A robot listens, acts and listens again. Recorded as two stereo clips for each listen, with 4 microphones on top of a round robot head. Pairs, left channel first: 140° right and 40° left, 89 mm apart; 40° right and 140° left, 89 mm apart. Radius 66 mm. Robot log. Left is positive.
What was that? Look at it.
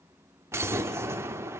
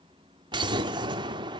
note: The explosion: 105° left.
cmd yaw +105
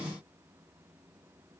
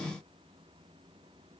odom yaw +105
end: I heard an explosion from this way, but can't make it out now.